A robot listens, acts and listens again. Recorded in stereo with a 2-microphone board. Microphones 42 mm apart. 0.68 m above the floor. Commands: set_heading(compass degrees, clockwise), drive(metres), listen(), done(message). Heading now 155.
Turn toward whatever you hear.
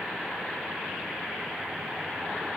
listen()
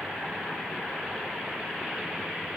listen()
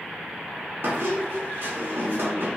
set_heading(210)
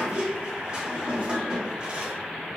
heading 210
set_heading(240)
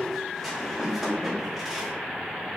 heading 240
done("Facing the squeak, under 1 m away.")